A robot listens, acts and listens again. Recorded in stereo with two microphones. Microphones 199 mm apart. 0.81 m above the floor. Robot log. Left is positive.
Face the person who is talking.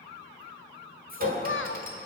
cmd yaw +90
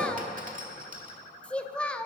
end: Found it: a child speaking, straight ahead, under 1 m away.